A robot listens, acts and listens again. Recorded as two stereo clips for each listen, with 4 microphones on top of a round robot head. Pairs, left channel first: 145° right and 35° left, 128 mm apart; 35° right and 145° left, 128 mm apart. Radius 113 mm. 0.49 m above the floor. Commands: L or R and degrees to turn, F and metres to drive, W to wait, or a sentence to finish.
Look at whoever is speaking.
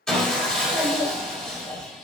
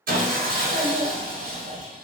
L160
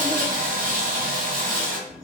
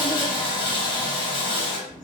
R55
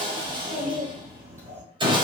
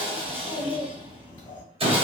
L10
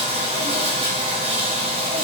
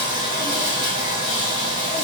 W
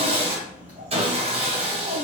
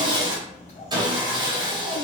Found it: a child speaking, straight ahead, 2 to 4 m away.